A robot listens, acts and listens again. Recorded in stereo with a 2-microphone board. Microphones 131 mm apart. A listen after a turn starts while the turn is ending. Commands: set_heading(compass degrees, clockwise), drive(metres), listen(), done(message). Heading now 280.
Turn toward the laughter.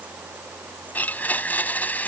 listen()
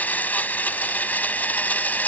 listen()
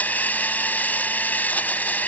done("I can't make out laughter, only a blender.")